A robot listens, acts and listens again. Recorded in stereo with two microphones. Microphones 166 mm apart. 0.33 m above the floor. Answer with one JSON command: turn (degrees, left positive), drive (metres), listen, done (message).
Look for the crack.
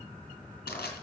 {"listen": true}
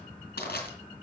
{"listen": true}
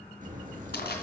{"turn": -50}
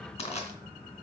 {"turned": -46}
{"listen": true}
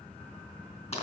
{"done": "I heard a crack, but can't make it out now. It was about 5° right or 80° right."}